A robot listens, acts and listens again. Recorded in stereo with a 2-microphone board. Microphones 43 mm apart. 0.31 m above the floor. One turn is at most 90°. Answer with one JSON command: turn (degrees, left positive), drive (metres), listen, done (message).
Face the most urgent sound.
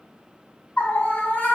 {"turn": 40}
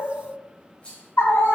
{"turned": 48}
{"turn": 85}
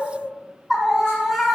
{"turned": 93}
{"turn": -10}
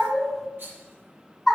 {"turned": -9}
{"done": "Found it: a scream, straight ahead, 2 to 4 m away."}